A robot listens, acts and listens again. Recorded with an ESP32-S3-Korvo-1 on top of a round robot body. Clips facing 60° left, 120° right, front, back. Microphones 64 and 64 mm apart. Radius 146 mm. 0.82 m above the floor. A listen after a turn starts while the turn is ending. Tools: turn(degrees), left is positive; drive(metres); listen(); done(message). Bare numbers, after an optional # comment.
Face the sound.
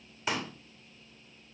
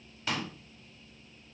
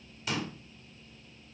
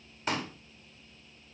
# The pop: 135° left.
turn(135)
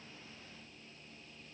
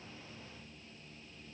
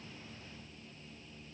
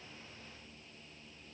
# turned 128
done("I heard a pop from this way, but can't make it out now.")